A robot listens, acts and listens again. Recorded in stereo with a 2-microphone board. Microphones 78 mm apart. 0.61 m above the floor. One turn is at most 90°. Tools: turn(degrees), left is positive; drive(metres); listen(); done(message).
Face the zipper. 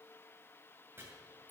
listen()
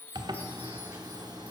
turn(degrees=-65)
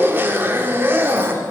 turn(degrees=-30)
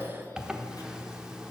turn(degrees=-10)
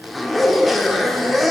done("Facing the zipper, under 1 m away.")